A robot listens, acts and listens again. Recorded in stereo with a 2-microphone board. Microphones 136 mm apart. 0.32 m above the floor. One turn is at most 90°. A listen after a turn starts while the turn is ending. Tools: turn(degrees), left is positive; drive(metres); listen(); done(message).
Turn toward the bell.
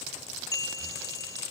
turn(degrees=25)
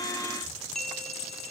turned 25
done("Facing the bell.")